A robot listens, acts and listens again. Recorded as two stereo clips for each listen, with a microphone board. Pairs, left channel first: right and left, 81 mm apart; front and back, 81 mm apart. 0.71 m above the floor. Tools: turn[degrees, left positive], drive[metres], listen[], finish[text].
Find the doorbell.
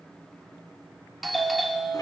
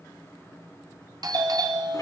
Thought: The doorbell: straight behind.
Action: turn[180]
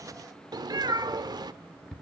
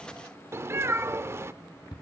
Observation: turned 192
Thought: The doorbell is now 10° right.
Action: turn[-10]
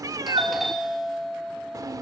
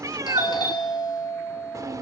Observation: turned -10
Action: finish[Facing the doorbell.]